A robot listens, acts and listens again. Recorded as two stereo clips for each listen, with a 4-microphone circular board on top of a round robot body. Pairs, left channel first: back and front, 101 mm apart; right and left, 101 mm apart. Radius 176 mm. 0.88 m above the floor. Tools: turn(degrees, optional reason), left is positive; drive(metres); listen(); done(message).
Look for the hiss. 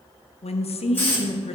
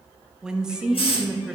turn(degrees=-110, reason="The hiss: 110° right.")
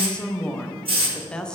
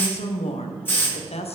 turn(degrees=-20, reason="The hiss is now 20° right.")
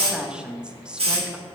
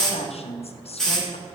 done("Found it: a hiss, straight ahead, 2 to 4 m away.")